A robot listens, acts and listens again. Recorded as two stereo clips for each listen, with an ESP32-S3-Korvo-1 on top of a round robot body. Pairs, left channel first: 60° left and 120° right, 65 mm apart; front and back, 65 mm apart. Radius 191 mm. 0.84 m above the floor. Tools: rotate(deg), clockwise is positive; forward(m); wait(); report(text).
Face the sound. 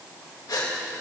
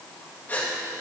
rotate(-60)
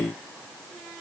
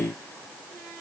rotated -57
report("I heard a gasp from this way, but can't make it out now.")